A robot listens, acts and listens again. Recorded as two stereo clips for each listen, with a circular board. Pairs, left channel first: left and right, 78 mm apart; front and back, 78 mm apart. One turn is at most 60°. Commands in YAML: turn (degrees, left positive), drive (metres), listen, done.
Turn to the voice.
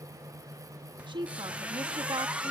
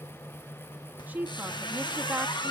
turn: -60
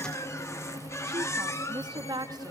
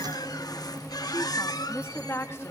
turn: -60
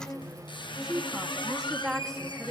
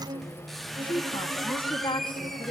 done: "Facing the woman speaking."